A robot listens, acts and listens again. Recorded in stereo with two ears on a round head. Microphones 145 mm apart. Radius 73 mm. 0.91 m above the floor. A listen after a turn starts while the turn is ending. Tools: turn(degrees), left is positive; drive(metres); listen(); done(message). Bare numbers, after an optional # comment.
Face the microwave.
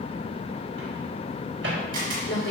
turn(-90)
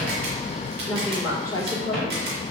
listen()
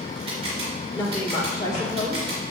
listen()
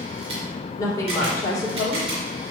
done("Facing where the microwave came from. I can't hear it now.")